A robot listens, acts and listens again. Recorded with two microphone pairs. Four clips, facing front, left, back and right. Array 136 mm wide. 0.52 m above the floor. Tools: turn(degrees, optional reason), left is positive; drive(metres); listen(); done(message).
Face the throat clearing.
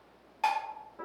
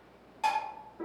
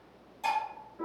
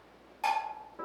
listen()
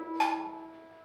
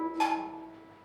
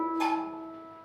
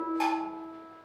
listen()
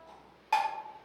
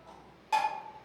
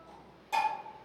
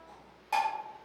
done("I can't make out throat clearing, only dishes clattering and a piano.")